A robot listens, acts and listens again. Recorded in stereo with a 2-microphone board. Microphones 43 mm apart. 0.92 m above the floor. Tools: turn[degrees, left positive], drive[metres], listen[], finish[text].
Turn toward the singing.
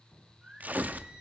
Thought: The singing: about 15° right or 165° right.
Action: turn[-15]
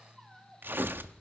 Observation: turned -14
Action: turn[-30]
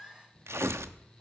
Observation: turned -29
Action: finish[Facing the singing.]